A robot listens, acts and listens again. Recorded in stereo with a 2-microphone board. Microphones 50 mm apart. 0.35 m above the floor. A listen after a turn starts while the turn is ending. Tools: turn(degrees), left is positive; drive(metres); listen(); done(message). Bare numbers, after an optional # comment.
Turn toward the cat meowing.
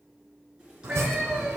turn(-30)
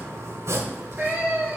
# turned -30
# So it is at 145° right.
turn(-145)
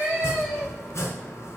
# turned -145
done("Facing the cat meowing.")